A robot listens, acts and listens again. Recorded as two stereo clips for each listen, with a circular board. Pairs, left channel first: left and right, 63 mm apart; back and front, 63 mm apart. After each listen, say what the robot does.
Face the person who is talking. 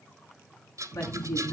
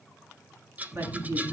Turn 55° left.
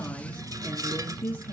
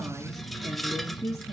Turn 25° left.
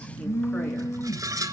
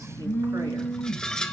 Keep listening.
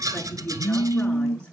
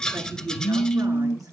Turn 15° left.
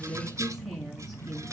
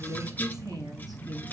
Facing the woman speaking, over 4 m away.